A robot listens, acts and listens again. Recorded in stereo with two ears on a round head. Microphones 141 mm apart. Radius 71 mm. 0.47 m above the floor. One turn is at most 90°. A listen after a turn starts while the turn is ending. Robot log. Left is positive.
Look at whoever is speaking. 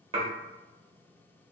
cmd idle
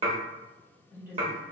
cmd yaw -30
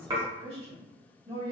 note: So it is at 140° right.
cmd yaw -90
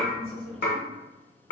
note: Nothing new. It was at 50° right.
cmd yaw -50
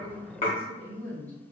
note: The woman speaking is now 10° left.
cmd yaw +10
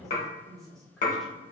end: Facing the woman speaking.